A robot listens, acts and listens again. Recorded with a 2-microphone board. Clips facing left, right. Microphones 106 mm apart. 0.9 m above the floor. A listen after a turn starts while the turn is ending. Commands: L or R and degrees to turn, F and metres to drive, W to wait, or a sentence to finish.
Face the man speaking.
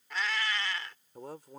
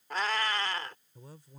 L90
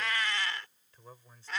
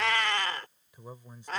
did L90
R15
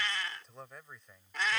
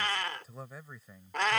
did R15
Facing the man speaking.